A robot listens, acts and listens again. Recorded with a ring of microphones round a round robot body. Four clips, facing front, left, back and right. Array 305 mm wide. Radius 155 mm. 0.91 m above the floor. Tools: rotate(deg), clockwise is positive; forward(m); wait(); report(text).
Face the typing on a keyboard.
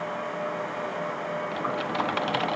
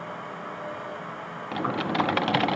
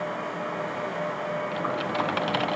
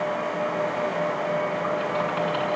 rotate(-95)
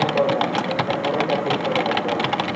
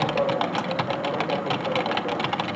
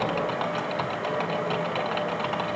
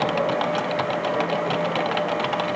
report("Found it: typing on a keyboard, straight ahead.")